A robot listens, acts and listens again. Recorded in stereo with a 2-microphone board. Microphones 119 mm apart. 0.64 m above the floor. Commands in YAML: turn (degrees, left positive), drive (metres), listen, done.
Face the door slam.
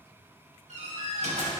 turn: -90
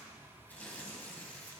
done: "Facing where the door slam came from. I can't hear it now."